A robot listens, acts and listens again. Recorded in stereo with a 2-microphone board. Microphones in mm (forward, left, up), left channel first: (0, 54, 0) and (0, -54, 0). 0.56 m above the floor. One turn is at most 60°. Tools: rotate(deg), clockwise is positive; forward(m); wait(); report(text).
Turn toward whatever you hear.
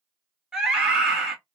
rotate(30)
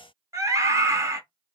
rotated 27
rotate(60)
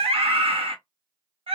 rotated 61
rotate(60)
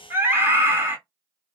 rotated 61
rotate(25)
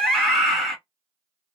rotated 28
report("Found it: a scream, straight ahead, 1 to 2 m away.")